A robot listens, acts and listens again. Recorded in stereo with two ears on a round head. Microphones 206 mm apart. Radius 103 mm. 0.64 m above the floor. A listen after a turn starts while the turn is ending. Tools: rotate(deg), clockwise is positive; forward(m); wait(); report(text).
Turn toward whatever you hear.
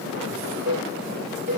rotate(60)
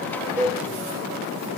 rotate(15)
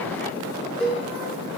report("Facing the cowbell, 1 to 2 m away.")